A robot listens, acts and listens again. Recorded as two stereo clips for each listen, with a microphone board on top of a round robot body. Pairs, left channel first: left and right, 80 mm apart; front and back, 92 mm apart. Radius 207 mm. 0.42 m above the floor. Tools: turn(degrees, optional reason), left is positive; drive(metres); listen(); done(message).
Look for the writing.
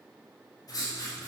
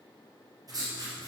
turn(degrees=135, reason="The writing: 135° left.")
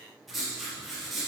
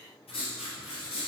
done("Found it: writing, straight ahead.")